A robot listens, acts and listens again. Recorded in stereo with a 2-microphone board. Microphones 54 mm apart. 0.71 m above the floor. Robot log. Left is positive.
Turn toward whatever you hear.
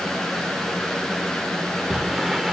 cmd yaw -30
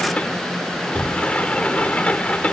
note: So it is at 25° left.
cmd yaw +25
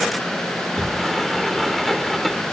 end: Facing the sliding door.